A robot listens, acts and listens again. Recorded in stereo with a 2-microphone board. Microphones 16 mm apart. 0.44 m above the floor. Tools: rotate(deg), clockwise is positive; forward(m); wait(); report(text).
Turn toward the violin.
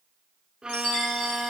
rotate(45)
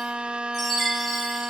rotate(85)
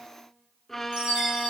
rotate(-20)
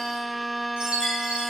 report("Facing the violin, under 1 m away.")